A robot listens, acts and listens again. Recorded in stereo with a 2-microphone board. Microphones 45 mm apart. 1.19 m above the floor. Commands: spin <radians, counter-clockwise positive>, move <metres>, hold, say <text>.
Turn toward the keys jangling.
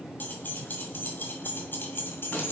spin 0.96
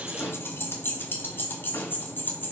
spin 0.79
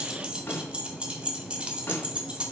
spin -0.44
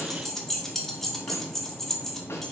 spin 0.17
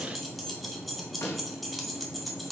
say Facing the keys jangling.